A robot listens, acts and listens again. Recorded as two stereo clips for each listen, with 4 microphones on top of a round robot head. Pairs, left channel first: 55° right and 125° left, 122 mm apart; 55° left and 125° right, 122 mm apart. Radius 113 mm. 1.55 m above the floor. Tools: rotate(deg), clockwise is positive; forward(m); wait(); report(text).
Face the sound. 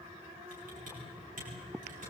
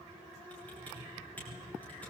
rotate(-135)
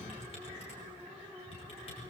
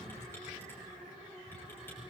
rotate(15)
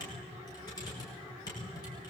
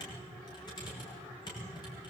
report("Found it: typing on a keyboard, straight ahead.")